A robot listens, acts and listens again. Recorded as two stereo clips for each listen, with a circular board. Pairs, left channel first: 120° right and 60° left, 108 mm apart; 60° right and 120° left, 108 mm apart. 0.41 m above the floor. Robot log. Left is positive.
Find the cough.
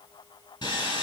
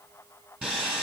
cmd idle
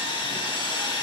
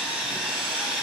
cmd idle
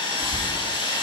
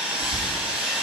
note: The cough: 45° left.
cmd yaw +45
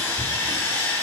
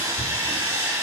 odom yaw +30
note: The cough is now 15° left.
cmd yaw +15
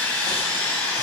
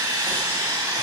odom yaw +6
note: Nothing new. It was at 10° left.
cmd yaw +10
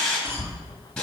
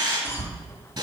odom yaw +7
end: Facing the cough.